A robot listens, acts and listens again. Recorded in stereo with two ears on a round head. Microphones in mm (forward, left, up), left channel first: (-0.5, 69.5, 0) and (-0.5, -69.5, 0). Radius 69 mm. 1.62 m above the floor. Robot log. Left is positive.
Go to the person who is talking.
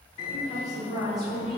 cmd yaw +30
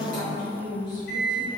note: So it is at 150° left.
cmd yaw +150
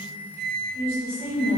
note: The woman speaking is now 15° left.
cmd yaw +15
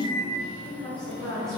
cmd fwd 1.0
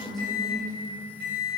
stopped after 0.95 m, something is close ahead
end: Arrived at the woman speaking, straight ahead.